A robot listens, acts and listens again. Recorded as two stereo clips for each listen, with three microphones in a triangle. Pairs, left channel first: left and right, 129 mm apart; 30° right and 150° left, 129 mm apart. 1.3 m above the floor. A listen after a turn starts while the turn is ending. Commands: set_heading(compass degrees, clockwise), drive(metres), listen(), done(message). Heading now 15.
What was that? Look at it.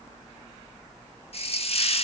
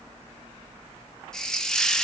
set_heading(320)
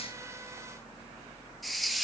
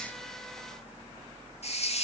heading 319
done("Found it: a hiss, straight ahead.")